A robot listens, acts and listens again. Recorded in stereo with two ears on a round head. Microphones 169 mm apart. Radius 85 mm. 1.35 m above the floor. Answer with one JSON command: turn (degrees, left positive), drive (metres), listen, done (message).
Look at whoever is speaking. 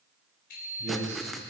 {"turn": -75}
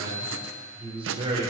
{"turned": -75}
{"turn": -30}
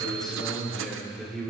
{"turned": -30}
{"done": "Found it: a man speaking, straight ahead."}